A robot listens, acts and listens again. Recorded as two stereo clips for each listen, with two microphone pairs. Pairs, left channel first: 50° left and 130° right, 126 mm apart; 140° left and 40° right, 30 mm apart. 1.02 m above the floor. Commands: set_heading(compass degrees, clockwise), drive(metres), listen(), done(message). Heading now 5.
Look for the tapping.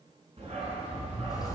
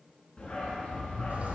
listen()
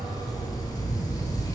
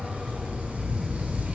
listen()
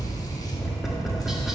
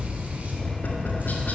set_heading(220)
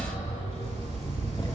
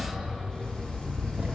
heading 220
listen()
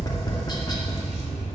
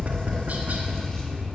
done("Found it: tapping, straight ahead.")